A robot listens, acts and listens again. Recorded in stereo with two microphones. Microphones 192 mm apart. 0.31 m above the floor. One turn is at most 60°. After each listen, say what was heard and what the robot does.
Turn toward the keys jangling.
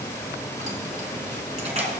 The keys jangling: about 35° right or 145° right. Turn 35° right.
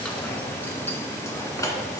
So it is at 20° left. Turn 20° left.
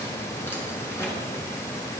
Keep listening.
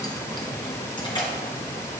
The keys jangling is now 25° left. Turn 25° left.
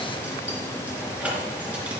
Facing the keys jangling.